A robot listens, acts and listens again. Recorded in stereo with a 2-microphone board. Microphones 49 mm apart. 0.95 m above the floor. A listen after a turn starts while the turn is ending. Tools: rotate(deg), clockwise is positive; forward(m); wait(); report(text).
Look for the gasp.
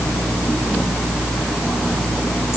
wait()
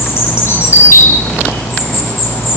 wait()
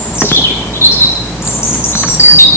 report("I can't make out a gasp to turn to.")